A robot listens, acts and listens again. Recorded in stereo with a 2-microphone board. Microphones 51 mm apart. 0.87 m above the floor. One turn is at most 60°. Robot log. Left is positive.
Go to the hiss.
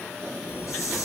note: The hiss: about 70° left or 110° left.
cmd yaw +60
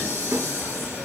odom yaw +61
note: So it is at 50° left.
cmd yaw +50
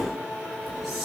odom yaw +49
cmd fwd 1.0
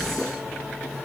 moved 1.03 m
cmd fwd 1.0
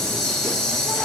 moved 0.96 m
note: The hiss is now 10° left.
cmd yaw +10
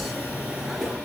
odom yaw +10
cmd fwd 1.0
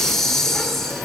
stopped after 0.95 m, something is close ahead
end: Arrived at the hiss, straight ahead.